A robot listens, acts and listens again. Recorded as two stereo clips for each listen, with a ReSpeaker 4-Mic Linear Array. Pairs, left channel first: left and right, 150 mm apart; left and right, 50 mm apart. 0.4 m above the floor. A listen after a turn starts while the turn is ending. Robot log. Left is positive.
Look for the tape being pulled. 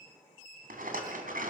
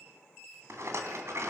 cmd idle
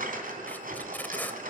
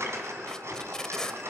cmd yaw +30
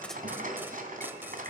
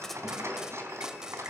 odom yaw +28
cmd idle
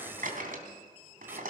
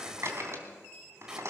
cmd idle
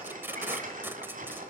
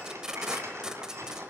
note: So it is at 15° right.
cmd yaw -15
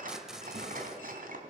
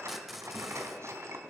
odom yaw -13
cmd idle
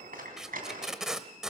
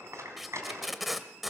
end: Found it: tape being pulled, straight ahead, under 1 m away.